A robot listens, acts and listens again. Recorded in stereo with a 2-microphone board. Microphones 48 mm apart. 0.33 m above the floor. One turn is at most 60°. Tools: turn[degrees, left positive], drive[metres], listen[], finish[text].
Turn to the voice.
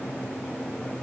Action: listen[]
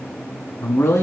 Thought: The man speaking: about 65° left or 115° left.
Action: turn[60]
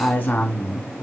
Thought: So it is at 40° left.
Action: turn[40]
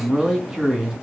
Thought: The man speaking is now 10° right.
Action: turn[-10]
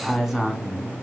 Action: finish[Found it: a man speaking, straight ahead.]